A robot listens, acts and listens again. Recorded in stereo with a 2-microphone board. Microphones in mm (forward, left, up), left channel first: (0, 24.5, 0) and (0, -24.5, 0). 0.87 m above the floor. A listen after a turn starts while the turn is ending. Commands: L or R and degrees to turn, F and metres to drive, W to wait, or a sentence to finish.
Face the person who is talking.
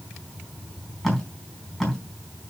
W
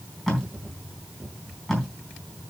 W
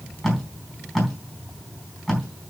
I can't make out anyone speaking, only tape being pulled.